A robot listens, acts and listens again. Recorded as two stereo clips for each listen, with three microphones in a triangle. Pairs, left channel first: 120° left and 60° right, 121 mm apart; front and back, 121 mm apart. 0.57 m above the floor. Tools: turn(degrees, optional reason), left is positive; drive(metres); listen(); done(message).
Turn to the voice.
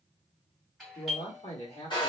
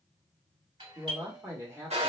turn(degrees=120, reason="The man speaking: 120° left.")
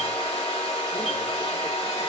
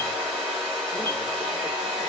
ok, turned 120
listen()
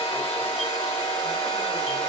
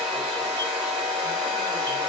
listen()
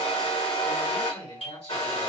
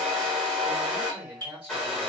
turn(degrees=100, reason="The man speaking is now 100° left.")
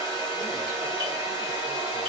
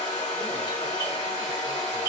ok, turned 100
listen()
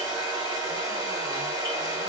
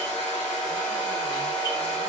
listen()
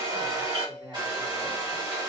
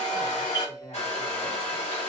done("Facing the man speaking, 2 to 4 m away.")